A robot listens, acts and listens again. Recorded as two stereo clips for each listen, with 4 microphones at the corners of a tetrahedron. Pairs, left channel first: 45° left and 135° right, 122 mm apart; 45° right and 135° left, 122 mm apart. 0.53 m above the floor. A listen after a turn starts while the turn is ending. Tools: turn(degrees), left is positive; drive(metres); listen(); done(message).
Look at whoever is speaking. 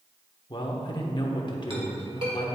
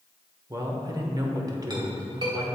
turn(degrees=85)
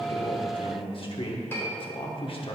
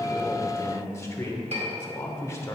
turn(degrees=15)
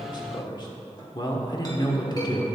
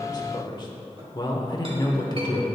done("Facing the man speaking, 1 to 2 m away.")